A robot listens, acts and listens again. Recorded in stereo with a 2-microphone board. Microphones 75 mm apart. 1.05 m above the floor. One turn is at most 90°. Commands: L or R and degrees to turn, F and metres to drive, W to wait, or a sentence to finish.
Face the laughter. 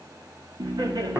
R65
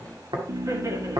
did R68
R50
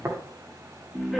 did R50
Facing the laughter.